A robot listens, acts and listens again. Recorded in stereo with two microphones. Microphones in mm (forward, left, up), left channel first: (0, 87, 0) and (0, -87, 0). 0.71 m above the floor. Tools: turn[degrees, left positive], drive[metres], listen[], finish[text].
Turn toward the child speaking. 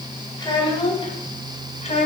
Thought: The child speaking: about 40° left or 140° left.
Action: turn[40]
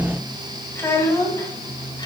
Thought: So it is at 20° left.
Action: turn[20]
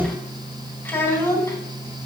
Thought: The child speaking is now 15° left.
Action: turn[15]
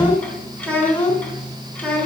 Thought: The child speaking is now 10° left.
Action: turn[10]
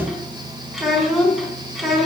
Action: finish[Facing the child speaking.]